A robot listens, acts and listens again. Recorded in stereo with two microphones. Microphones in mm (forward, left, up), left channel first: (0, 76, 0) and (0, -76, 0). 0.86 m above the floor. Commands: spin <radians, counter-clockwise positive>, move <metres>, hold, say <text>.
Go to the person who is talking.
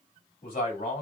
spin 1.22
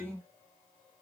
spin 0.17
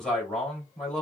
move 1.0
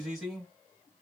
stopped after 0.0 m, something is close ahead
say Blocked. The man speaking is further on, straight ahead.